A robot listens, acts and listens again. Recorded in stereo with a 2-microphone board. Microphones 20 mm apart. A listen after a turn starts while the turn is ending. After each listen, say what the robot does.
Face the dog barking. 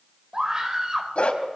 Turn 70° left.
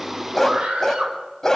Turn 15° left.
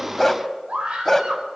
Turn 10° left.
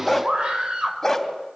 Turn 10° left.
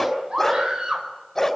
Turn 10° left.
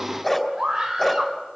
Found it: a dog barking, straight ahead, 2 to 4 m away.